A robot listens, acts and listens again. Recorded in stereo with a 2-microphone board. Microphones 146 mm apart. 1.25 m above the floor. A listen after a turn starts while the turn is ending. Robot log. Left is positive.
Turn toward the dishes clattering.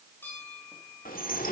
cmd yaw +90
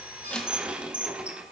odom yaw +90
end: Facing the dishes clattering.